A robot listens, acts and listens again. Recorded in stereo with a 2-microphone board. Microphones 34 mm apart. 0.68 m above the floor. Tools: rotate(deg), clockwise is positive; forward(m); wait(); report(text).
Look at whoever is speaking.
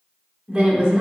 rotate(25)
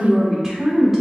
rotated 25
report("Found it: a woman speaking, straight ahead, 1 to 2 m away.")